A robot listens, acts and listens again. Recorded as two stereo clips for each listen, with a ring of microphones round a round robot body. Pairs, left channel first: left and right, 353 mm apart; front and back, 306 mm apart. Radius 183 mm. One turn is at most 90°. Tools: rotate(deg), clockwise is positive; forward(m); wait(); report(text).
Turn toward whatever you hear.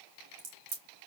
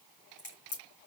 rotate(65)
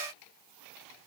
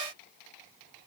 report("Facing where the crack came from. I can't hear it now.")